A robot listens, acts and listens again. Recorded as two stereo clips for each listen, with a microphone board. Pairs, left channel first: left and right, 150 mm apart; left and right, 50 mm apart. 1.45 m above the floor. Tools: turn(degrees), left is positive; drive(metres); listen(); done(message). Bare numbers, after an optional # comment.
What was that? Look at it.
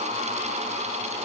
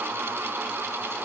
listen()
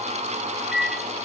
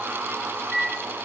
turn(-30)
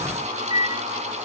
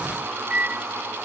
# So it is at 150° right.
turn(-150)
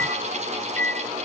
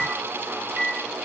# The microwave is now 10° left.
turn(10)
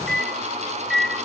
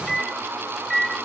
done("Found it: a microwave, straight ahead.")